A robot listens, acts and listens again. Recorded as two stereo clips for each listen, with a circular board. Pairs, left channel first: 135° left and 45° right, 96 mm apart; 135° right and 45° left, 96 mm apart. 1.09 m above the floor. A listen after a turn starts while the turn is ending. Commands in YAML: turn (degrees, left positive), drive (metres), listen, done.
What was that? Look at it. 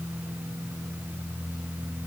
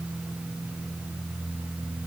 listen: true
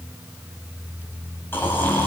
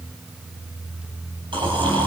turn: 70
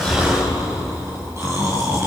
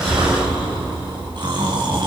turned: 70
turn: 15
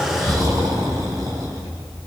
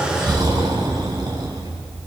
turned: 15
done: "Facing the snoring, over 4 m away."